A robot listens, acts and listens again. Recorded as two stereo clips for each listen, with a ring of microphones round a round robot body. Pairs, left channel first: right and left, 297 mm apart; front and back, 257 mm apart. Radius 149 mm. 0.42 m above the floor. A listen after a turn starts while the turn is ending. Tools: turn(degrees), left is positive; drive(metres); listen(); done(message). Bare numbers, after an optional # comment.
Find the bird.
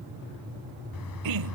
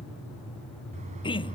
# The bird: 110° right.
turn(-110)
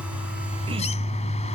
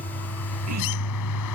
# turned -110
# The bird is now 20° right.
turn(-20)
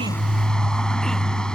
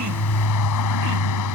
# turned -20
done("Found it: a bird, straight ahead.")